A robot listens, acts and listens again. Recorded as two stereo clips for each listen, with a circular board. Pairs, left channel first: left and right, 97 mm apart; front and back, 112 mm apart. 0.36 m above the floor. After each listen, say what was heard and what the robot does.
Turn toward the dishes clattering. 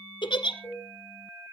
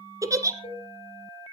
The dishes clattering: 25° left. Turn 25° left.
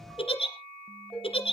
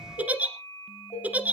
The dishes clattering is now 10° left. Turn 10° left.
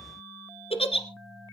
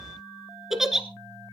Keep listening.
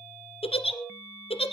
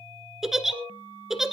Found it: dishes clattering, straight ahead.